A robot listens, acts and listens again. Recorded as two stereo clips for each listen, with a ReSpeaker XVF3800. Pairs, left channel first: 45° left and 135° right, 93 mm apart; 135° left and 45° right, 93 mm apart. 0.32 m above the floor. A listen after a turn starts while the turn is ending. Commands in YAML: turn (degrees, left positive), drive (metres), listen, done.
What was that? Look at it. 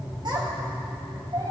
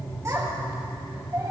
turn: -100
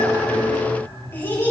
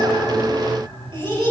turn: -20
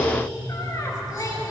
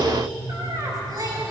done: "Found it: a child speaking, straight ahead."